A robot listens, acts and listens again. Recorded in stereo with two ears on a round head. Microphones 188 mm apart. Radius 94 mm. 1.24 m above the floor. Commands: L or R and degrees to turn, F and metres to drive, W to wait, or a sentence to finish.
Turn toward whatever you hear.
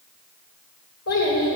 L75
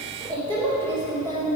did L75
L15
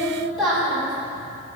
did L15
Found it: a child speaking, straight ahead.